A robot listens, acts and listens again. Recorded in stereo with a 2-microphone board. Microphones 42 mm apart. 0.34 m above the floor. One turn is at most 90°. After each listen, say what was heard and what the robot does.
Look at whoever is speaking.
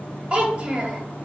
The child speaking: about 25° right or 155° right. Turn 25° right.
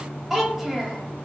Facing the child speaking.